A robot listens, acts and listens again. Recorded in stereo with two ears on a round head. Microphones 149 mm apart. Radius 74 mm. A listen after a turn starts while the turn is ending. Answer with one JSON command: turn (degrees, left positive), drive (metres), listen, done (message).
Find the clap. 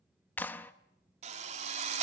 {"turn": 30}
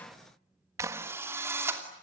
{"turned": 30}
{"turn": -20}
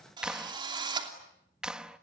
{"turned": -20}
{"done": "Found it: a clap, straight ahead, under 1 m away."}